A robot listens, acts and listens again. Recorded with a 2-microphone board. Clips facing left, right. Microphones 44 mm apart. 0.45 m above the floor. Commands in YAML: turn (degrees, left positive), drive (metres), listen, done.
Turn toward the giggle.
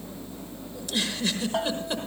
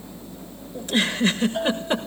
turn: -35
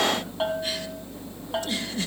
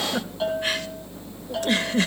turn: -100
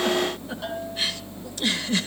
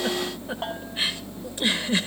turn: -25
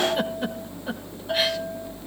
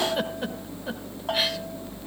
listen: true
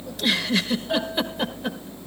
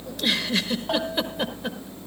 done: "Facing the giggle."